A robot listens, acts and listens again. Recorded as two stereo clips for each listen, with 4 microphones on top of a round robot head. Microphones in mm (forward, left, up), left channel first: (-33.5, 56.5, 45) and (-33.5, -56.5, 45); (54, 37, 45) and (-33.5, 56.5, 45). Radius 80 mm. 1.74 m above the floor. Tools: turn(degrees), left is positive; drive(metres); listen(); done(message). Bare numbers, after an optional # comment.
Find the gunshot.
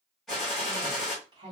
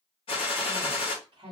done("Found it: a gunshot, straight ahead.")